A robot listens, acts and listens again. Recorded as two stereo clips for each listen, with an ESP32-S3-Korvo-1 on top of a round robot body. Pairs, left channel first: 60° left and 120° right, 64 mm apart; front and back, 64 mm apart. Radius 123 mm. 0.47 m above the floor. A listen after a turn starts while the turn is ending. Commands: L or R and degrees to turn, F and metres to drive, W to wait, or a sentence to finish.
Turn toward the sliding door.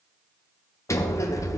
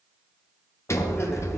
L35
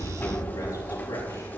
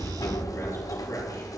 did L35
Found it: a sliding door, straight ahead.